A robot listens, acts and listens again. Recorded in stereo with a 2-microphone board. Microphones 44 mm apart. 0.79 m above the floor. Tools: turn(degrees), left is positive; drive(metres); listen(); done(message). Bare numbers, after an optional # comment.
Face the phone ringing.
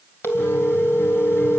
# The phone ringing: about 70° left or 110° left.
turn(70)
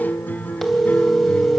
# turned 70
done("Found it: a phone ringing, straight ahead.")